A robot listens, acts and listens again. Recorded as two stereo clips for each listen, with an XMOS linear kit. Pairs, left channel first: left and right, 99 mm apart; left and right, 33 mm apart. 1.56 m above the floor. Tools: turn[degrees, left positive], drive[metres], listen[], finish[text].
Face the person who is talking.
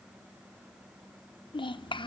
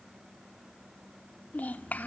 Thought: The child speaking: about 55° left or 125° left.
Action: turn[55]
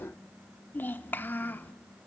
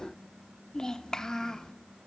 Thought: So it is at 25° left.
Action: turn[25]
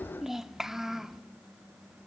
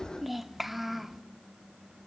Action: finish[Facing the child speaking, under 1 m away.]